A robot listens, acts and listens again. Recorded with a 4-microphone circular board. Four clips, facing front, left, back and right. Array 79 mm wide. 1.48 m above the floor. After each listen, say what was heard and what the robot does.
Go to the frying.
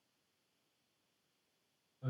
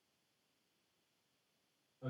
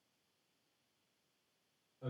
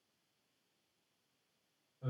Keep listening.
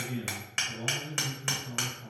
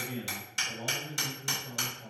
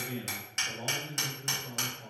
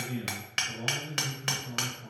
Keep listening.
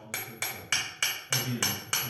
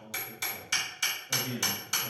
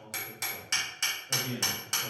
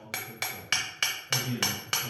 I can't make out frying to turn to.